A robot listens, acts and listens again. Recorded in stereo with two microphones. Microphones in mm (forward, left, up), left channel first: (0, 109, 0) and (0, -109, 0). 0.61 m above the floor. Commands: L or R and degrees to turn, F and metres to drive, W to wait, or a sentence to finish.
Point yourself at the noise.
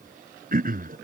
R45
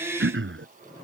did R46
R90
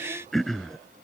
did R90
Facing the throat clearing.